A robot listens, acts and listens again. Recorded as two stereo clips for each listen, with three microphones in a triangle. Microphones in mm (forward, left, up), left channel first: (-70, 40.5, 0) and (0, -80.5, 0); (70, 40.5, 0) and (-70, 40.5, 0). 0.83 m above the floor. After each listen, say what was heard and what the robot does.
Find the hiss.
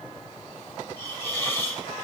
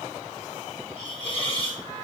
The hiss: 50° left. Turn 50° left.
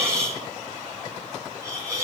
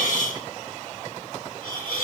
The hiss is now 10° left. Turn 10° left.
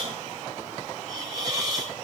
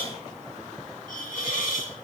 Found it: a hiss, straight ahead, 2 to 4 m away.